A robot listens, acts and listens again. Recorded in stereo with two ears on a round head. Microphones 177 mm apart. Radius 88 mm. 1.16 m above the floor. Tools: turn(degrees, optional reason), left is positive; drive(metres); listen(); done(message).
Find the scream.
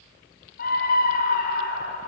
turn(degrees=50, reason="The scream: about 50° left or 130° left.")
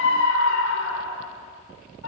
turn(degrees=80, reason="So it is at 80° left.")
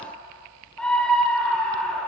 done("Facing the scream, over 4 m away.")